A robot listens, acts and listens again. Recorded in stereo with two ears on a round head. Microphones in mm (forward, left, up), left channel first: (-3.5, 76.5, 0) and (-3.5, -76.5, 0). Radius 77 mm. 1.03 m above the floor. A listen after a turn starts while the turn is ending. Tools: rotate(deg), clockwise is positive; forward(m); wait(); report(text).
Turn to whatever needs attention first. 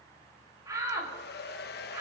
rotate(20)
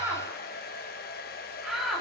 report("Found it: a shout, straight ahead.")